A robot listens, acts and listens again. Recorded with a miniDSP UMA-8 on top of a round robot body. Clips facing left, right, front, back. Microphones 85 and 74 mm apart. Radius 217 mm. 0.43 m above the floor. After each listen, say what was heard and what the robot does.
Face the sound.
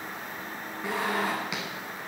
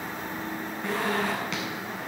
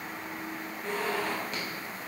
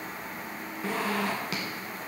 The zipper: 170° left. Turn 170° left.
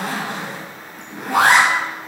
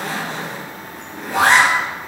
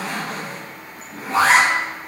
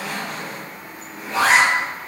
The zipper is now 55° left. Turn 55° left.
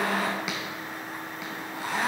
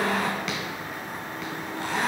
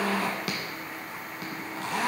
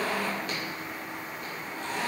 Facing the zipper.